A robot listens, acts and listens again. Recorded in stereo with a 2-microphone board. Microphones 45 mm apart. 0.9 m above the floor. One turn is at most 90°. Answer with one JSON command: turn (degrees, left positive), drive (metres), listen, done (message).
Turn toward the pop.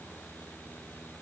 {"listen": true}
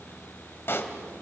{"turn": 65}
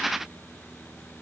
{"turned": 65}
{"listen": true}
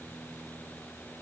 {"done": "I heard a pop, but can't make it out now. It was about straight ahead or 50° left."}